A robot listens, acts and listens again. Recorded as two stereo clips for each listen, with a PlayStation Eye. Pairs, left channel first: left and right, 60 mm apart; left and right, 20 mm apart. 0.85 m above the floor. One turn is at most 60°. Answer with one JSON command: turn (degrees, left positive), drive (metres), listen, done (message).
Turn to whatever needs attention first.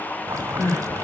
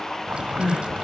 {"turn": 60}
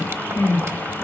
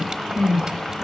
{"turn": 40}
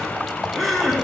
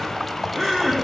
{"done": "Facing the crying."}